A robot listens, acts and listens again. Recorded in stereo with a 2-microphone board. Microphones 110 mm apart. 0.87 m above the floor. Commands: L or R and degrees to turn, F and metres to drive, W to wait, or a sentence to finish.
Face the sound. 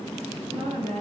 R90
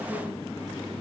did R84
W
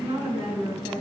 R10
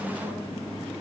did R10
W
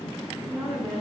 Found it: a woman speaking, straight ahead, over 4 m away.